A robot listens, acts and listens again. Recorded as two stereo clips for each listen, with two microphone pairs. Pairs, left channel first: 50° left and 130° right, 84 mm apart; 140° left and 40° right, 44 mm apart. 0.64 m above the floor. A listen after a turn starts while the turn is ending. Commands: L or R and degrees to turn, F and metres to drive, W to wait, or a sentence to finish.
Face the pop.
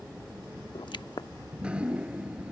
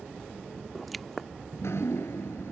L55
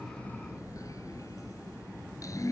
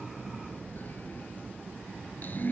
I heard a pop from this way, but can't make it out now.